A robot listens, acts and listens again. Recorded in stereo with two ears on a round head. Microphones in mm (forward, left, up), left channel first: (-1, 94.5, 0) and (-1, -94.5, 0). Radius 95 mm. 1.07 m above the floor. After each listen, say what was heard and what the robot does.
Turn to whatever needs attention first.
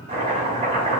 Keep listening.
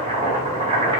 Keep listening.
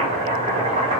I can't make out anything urgent, only chopping.